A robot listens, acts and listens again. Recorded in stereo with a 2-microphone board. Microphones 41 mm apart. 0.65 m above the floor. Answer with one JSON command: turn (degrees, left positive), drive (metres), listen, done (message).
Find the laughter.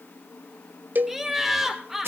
{"turn": -30}
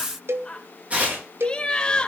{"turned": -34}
{"turn": 25}
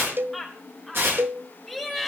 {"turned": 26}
{"done": "Found it: laughter, straight ahead."}